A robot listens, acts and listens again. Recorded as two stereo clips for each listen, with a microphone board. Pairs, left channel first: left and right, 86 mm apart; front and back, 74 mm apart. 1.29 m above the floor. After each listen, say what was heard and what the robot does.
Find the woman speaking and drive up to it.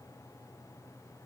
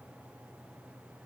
Keep listening.
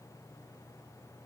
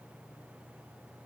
Keep listening.
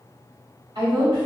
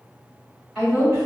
The woman speaking: 80° right. Turn 80° right.
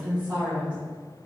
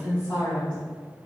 The woman speaking is now 20° right. Turn 20° right.
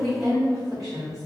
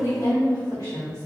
Drive 1.0 m forward.
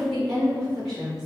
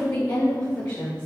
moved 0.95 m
Drive 1.0 m forward.
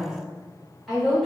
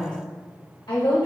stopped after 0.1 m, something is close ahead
Arrived at the woman speaking, straight ahead.